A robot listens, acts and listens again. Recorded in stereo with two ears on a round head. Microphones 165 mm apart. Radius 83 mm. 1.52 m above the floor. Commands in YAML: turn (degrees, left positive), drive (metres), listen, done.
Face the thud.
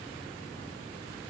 listen: true
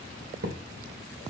turn: -65
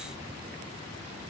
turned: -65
listen: true
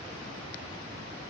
done: "I heard a thud, but can't make it out now. It was about straight ahead or 50° right."